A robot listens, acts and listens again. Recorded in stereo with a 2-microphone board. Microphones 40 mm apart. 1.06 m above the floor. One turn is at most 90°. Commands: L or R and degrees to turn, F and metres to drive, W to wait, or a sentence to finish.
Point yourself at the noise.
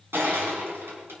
R70
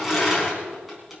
Found it: crushing, straight ahead.